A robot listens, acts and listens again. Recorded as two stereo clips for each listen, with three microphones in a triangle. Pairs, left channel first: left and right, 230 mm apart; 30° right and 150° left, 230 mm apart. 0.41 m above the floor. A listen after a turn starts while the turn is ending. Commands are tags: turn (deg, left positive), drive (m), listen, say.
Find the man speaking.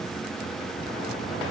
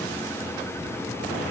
<listen/>
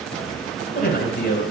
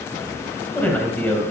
<turn deg="50"/>
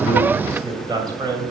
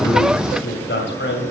<turn deg="-20"/>
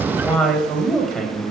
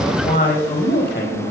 <say>Found it: a man speaking, straight ahead.</say>